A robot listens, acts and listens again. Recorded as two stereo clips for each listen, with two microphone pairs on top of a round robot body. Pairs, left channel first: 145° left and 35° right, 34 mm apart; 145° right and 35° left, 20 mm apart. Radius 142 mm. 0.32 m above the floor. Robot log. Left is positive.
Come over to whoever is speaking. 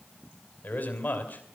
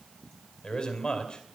note: The man speaking: 175° left.
cmd yaw +175
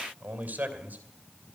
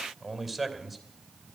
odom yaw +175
note: The man speaking is now 45° right.
cmd yaw -45
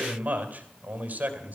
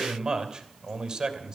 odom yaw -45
note: The man speaking is now 10° right.
cmd yaw -10
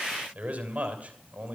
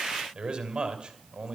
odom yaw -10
cmd fwd 1.0
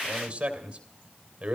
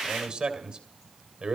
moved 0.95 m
note: The man speaking is now 10° left.
cmd yaw +10
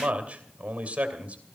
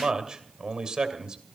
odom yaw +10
cmd fwd 1.0
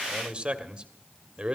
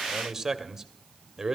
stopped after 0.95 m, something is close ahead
end: I am next to the man speaking.